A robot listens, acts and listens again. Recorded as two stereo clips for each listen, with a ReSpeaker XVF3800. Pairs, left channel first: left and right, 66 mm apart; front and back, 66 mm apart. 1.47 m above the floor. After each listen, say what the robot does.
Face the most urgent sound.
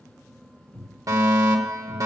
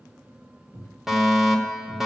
Turn 95° right.
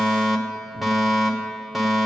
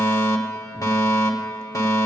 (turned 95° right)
Facing the fire alarm, 1 to 2 m away.